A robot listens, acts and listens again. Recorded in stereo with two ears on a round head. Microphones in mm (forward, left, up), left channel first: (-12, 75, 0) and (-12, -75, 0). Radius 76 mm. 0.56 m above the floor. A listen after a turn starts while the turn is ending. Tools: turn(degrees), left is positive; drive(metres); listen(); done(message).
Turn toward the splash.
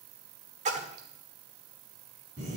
turn(degrees=-45)
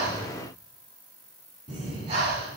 listen()
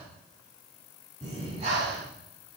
done("I heard a splash, but can't make it out now. It was about straight ahead or 90° right.")